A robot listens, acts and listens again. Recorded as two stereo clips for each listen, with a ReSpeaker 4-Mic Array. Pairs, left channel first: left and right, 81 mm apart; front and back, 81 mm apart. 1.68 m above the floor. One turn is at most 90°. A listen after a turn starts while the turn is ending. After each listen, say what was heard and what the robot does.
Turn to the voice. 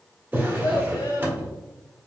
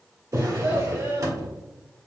The child speaking: 115° left. Turn 90° left.
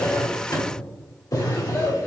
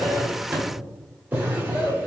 The child speaking is now 20° left. Turn 20° left.
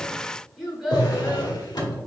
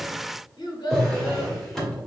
Found it: a child speaking, straight ahead.